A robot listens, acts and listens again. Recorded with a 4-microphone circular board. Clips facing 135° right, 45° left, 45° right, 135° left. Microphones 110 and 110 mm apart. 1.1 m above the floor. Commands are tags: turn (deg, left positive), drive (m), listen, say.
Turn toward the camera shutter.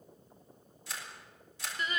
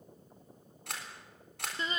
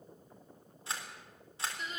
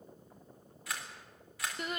<turn deg="15"/>
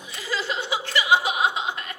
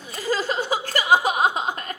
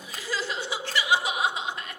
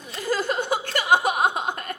<listen/>
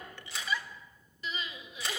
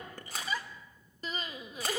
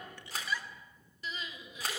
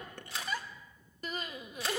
<say>Facing the camera shutter.</say>